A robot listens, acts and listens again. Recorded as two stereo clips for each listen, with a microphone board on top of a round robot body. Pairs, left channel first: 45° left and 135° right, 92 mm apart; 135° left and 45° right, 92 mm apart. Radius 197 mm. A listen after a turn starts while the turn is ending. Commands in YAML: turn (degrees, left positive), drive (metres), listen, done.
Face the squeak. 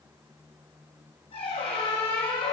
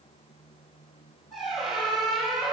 turn: 45
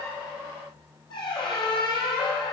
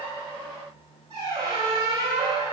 done: "Facing the squeak, 2 to 4 m away."